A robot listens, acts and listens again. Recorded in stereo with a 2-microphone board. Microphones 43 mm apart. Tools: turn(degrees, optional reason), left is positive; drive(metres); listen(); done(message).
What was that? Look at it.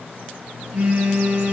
turn(degrees=-45, reason="The phone buzzing: about 45° right or 135° right.")
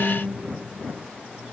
listen()
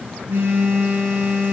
turn(degrees=-90, reason="So it is at 90° right.")
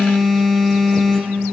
turn(degrees=-15, reason="The phone buzzing is now 15° right.")
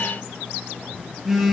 done("Facing the phone buzzing, 1 to 2 m away.")